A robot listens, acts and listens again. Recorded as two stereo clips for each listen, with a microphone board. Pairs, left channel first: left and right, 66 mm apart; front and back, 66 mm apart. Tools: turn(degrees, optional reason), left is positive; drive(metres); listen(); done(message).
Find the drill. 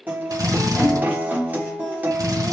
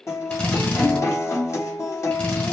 turn(degrees=-70, reason="The drill: 70° right.")
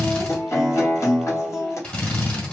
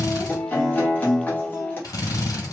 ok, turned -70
turn(degrees=20, reason="The drill is now 20° left.")
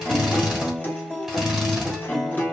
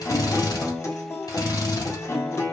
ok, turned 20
done("Found it: a drill, straight ahead, 1 to 2 m away.")